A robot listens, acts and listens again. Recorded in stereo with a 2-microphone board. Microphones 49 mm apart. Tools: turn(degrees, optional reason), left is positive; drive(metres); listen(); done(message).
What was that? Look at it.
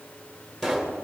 turn(degrees=30)
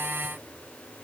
listen()
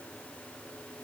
done("I heard a pop, but can't make it out now. It was about 20° right or 140° left.")